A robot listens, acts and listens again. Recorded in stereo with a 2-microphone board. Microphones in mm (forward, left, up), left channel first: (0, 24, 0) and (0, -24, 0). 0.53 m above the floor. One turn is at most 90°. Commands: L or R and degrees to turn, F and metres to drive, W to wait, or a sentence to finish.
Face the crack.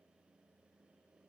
W
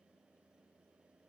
W
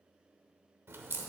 R60
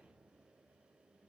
W
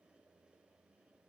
I heard a crack, but can't make it out now. It was about straight ahead or 60° right.